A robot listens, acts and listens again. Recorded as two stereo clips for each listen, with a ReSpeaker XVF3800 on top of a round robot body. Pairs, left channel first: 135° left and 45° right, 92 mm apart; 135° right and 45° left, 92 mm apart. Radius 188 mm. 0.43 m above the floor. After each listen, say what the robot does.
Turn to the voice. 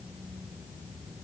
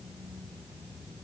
Keep listening.
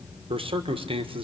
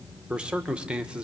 Turn 35° right.
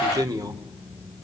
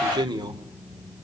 Facing the man speaking, 1 to 2 m away.